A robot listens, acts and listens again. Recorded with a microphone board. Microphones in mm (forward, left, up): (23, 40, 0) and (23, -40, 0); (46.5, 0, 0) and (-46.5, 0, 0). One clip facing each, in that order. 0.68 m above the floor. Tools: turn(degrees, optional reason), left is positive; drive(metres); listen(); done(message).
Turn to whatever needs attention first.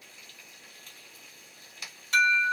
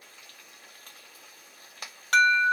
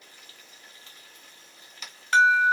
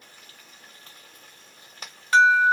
turn(degrees=-95, reason="The alarm: 95° right.")
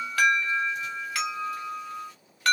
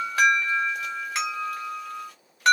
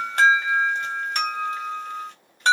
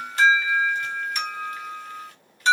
turn(degrees=-25, reason="The alarm is now 25° right.")
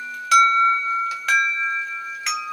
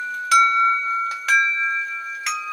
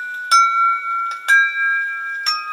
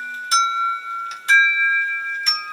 done("Found it: an alarm, straight ahead, 1 to 2 m away.")